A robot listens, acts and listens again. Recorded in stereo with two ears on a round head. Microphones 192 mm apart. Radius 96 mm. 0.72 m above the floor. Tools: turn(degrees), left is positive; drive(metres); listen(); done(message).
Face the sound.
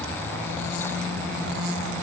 listen()
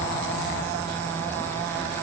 listen()
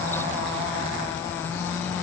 done("I can't make out anything.")